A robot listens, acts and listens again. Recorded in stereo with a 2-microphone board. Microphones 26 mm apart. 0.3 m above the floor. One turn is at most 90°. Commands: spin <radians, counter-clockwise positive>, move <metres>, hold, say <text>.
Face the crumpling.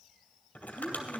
spin 1.57
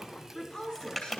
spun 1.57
say Facing the crumpling, 2 to 4 m away.